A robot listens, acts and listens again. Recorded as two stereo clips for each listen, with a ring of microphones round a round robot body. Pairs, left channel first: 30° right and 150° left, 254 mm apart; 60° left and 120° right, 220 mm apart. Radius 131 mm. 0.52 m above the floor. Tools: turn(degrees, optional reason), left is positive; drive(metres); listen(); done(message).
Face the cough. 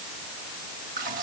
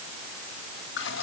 listen()
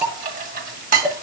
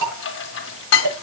listen()
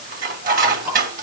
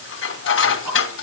done("I can't make out a cough to turn to.")